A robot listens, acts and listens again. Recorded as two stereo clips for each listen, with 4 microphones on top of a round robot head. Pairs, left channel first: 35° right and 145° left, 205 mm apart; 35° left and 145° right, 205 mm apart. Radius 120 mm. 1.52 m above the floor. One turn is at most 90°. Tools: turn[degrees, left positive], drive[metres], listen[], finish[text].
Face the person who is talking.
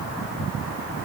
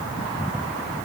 Action: listen[]
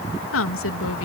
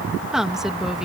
Thought: The woman speaking: 55° right.
Action: turn[-55]
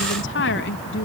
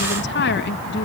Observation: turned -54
Action: finish[Facing the woman speaking.]